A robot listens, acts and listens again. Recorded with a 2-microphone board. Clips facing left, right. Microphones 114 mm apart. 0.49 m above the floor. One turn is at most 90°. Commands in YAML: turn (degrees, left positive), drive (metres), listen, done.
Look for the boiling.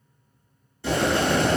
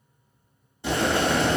turn: -20
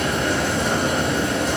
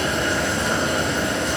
done: "Found it: boiling, straight ahead, 1 to 2 m away."